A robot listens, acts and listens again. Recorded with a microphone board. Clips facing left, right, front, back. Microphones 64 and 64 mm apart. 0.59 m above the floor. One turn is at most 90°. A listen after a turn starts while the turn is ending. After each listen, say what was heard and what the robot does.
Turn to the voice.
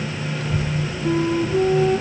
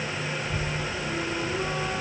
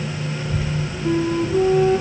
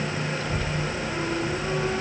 The child speaking: 75° left. Turn 75° left.
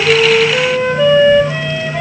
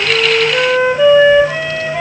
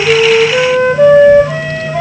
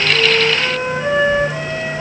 Keep listening.
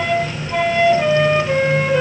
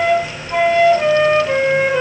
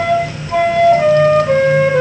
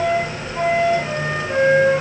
Keep listening.
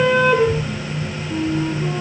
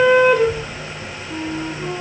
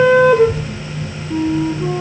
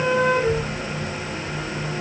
The child speaking is now 25° left. Turn 25° left.
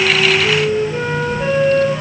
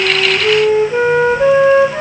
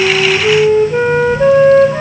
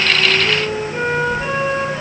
Keep listening.
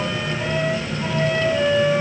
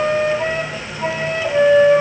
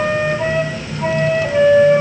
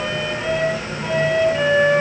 Keep listening.
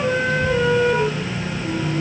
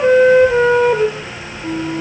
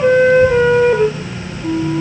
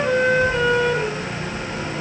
Facing where the child speaking came from. I can't hear it now.